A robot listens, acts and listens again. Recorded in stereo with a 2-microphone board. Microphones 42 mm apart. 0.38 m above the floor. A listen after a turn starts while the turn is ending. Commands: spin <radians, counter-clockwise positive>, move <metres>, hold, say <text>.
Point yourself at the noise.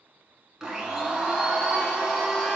spin -0.52
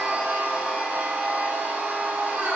spin -2.36
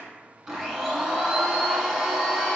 say Found it: a blender, straight ahead, under 1 m away.